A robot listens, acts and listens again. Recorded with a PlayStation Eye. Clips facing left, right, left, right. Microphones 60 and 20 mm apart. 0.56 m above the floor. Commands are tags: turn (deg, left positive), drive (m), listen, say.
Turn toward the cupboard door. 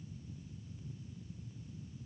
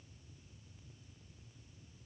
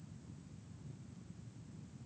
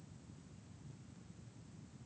<listen/>
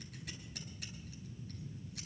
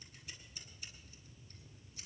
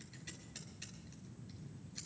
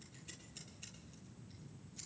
<listen/>
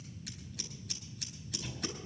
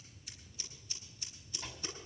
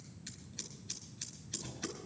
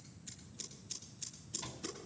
<turn deg="-45"/>
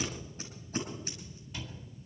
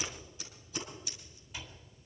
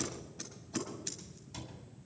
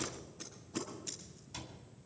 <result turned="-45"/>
<say>Facing the cupboard door, 2 to 4 m away.</say>